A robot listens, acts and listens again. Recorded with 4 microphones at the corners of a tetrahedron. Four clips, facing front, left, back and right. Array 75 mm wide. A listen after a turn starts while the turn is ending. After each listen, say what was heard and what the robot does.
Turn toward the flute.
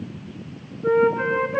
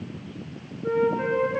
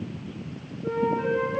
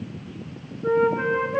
The flute: 35° right. Turn 35° right.
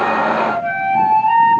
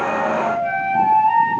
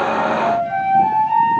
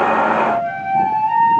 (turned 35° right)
Found it: a flute, straight ahead, over 4 m away.